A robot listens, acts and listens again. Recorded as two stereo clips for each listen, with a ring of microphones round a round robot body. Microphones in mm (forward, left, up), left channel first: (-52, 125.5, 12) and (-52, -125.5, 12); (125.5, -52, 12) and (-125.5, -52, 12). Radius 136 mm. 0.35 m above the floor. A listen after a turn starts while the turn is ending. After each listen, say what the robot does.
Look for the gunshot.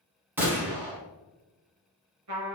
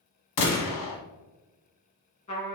Found it: a gunshot, straight ahead.